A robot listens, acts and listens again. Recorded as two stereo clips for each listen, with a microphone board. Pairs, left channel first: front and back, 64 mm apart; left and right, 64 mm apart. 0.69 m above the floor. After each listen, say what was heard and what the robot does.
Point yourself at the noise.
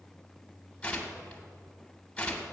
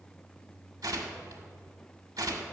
The tearing paper: 75° right. Turn 75° right.
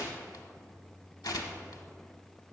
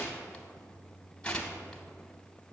The tearing paper is now 15° left. Turn 15° left.
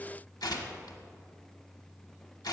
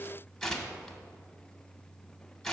Found it: tearing paper, straight ahead, under 1 m away.